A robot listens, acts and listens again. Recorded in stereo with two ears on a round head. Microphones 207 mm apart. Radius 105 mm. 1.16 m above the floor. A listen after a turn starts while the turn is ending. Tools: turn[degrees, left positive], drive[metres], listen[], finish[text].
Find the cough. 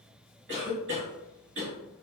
Thought: The cough: about 50° right or 130° right.
Action: turn[-50]
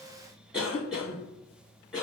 Action: finish[Facing the cough, 1 to 2 m away.]